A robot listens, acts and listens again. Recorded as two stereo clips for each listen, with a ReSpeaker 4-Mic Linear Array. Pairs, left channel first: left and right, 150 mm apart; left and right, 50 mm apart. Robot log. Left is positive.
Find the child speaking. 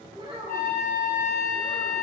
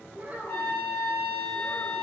note: The child speaking: about 35° right or 145° right.
cmd yaw -35
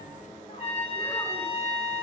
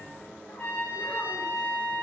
cmd idle
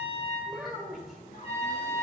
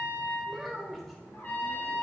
end: Facing the child speaking, 1 to 2 m away.